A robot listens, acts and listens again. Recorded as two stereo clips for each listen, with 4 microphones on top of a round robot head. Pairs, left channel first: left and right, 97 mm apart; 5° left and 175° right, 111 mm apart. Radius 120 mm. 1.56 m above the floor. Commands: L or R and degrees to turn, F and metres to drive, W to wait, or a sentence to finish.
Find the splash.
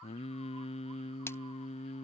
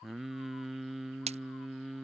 L160
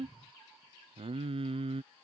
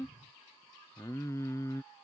Facing where the splash came from. I can't hear it now.